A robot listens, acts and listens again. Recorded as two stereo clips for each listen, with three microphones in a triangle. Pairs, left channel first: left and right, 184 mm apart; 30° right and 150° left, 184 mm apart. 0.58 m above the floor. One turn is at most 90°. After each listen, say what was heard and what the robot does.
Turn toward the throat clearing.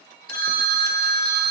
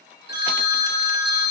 Keep listening.
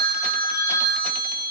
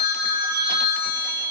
Keep listening.
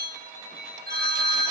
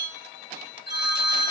I can't make out throat clearing, only a phone ringing.